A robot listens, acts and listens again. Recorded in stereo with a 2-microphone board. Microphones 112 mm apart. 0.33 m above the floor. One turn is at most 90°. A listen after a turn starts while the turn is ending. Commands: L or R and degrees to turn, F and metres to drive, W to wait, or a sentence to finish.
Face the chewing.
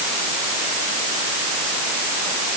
W
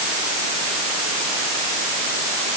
W
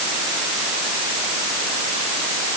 I can't make out chewing.